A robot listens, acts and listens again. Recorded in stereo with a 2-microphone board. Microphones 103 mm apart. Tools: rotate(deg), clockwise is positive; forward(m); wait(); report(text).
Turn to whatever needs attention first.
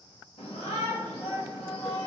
rotate(-90)
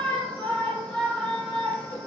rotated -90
rotate(-10)
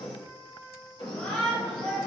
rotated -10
report("Facing the shout, 1 to 2 m away.")